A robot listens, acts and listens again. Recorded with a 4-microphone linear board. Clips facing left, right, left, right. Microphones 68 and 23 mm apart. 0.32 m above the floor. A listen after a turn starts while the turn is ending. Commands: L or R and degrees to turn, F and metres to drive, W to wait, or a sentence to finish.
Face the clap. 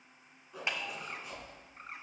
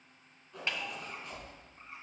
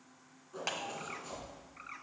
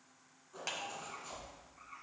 L15
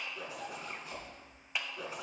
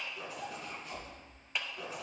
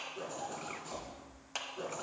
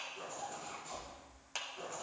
Facing the clap, 1 to 2 m away.